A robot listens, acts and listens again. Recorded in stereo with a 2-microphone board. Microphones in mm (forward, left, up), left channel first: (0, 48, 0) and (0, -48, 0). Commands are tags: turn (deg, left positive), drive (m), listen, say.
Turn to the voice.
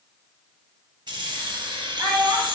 <turn deg="-30"/>
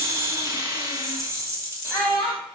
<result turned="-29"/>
<say>Found it: a child speaking, straight ahead, 1 to 2 m away.</say>